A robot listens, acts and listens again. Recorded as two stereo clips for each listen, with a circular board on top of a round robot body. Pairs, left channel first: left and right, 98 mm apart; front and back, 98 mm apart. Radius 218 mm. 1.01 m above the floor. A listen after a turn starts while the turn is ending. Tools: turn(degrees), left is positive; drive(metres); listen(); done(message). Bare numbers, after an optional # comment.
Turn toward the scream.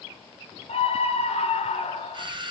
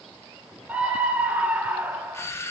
# The scream: 105° left.
turn(105)
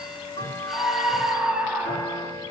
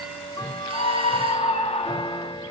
# The scream is now 15° right.
turn(-15)
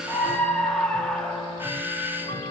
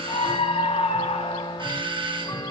done("Found it: a scream, straight ahead, 1 to 2 m away.")